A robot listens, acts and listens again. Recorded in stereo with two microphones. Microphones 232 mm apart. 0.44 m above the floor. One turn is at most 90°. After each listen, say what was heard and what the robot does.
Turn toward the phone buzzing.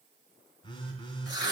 The phone buzzing: about 20° left or 160° left. Turn 20° left.
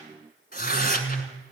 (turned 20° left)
Facing the phone buzzing, 2 to 4 m away.